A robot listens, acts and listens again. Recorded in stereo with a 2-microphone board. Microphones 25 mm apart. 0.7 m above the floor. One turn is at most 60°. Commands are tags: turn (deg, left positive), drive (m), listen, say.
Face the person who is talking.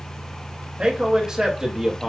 <turn deg="-15"/>
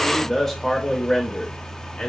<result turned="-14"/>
<turn deg="35"/>
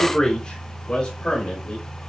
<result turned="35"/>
<turn deg="35"/>
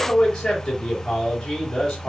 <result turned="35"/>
<turn deg="10"/>
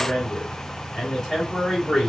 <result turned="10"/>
<say>Facing the man speaking, 2 to 4 m away.</say>